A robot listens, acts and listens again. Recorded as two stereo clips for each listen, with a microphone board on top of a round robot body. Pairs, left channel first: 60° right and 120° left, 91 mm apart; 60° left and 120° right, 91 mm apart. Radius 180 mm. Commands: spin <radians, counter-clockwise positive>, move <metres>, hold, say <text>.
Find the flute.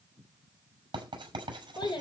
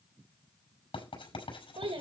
hold
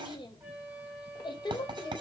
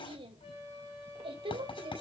spin 0.79
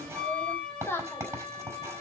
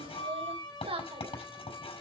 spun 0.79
spin 0.35
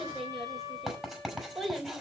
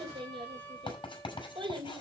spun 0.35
say Facing the flute.